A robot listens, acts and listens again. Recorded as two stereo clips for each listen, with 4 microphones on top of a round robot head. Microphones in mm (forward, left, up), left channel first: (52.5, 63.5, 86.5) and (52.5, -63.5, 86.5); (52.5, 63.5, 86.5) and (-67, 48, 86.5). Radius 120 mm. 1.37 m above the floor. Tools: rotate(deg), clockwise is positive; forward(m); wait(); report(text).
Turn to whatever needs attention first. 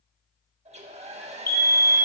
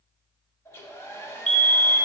rotate(-20)
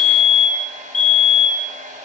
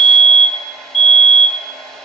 report("Found it: a fire alarm, straight ahead, 2 to 4 m away.")